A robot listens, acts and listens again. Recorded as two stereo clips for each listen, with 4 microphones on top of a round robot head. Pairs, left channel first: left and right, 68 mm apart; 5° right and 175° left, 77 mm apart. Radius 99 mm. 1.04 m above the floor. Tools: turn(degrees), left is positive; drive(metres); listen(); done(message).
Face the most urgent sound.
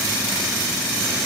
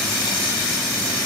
listen()
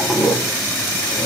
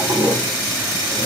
listen()
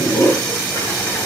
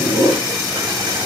done("I can't make out anything urgent, only a toilet flushing.")